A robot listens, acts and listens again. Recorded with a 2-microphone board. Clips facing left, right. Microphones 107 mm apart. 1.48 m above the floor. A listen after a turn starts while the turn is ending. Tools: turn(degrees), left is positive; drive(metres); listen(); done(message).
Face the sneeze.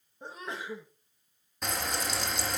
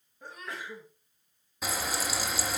turn(degrees=25)
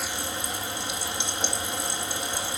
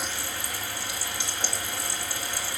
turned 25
listen()
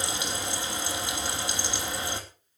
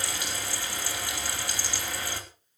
done("I heard a sneeze, but can't make it out now. It was about straight ahead or 130° left.")